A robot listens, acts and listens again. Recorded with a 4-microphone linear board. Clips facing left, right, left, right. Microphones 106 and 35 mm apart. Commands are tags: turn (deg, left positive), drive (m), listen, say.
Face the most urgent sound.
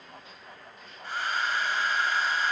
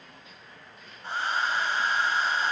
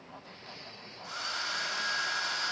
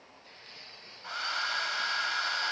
<listen/>
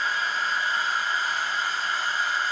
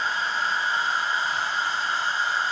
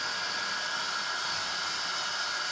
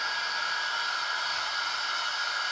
<listen/>
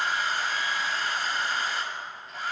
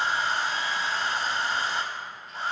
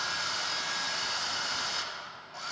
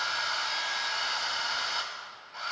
<say>I can't make out anything urgent, only a hair dryer.</say>